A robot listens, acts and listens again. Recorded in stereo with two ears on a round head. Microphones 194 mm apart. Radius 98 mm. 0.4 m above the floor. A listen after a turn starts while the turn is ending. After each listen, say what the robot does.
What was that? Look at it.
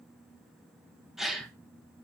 Turn 30° left.
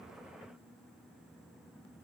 Keep listening.
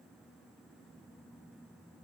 I heard a gasp, but can't make it out now. It was about 30° right or 150° left.